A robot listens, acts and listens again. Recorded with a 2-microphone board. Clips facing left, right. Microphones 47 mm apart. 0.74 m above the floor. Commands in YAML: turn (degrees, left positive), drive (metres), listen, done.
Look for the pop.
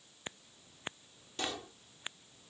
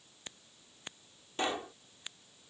turn: -30
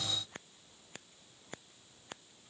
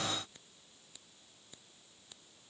listen: true
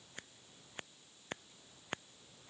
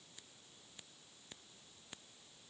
done: "I heard a pop, but can't make it out now. It was about straight ahead or 120° right."